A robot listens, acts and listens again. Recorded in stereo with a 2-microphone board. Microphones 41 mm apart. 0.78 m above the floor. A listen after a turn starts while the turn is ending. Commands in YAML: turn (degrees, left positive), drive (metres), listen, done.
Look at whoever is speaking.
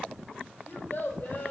turn: 55
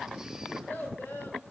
turn: 70
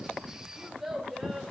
done: "Found it: a child speaking, straight ahead, 1 to 2 m away."